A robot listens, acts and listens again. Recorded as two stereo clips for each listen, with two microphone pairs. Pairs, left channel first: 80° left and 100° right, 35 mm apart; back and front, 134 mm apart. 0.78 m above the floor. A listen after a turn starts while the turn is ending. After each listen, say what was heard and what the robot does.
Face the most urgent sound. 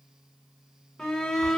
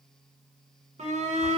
The shout: 20° left. Turn 20° left.
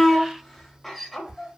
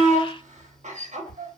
Found it: a shout, straight ahead, under 1 m away.